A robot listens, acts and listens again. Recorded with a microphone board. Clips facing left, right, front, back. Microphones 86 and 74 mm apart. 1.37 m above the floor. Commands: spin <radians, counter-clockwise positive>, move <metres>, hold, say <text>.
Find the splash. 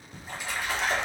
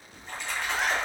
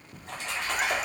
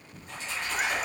say Found it: a splash, straight ahead.